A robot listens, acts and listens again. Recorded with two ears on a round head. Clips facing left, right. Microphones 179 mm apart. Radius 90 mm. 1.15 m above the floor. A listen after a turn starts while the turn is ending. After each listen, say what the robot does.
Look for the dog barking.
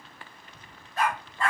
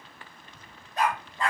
Turn 15° right.
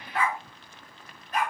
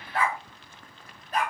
Turn 150° right.
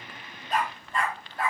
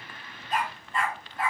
Turn 35° left.
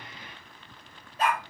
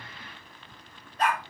Found it: a dog barking, straight ahead.